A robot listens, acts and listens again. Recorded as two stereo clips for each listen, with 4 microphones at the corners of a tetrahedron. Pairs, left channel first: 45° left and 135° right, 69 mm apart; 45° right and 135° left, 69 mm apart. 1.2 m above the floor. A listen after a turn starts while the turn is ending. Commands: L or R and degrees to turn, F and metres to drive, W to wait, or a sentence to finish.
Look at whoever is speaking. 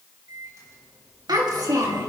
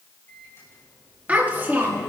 R165
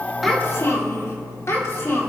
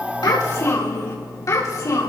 R10
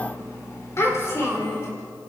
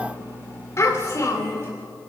Found it: a child speaking, straight ahead, 2 to 4 m away.